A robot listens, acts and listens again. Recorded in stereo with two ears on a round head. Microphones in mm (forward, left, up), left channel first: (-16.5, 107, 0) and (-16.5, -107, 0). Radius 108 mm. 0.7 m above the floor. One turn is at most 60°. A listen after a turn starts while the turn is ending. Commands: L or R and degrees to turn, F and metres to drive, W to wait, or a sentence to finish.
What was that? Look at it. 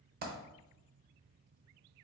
R40
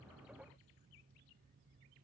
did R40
W
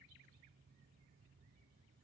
I heard a dropped coin, but can't make it out now. It was about straight ahead or 100° right.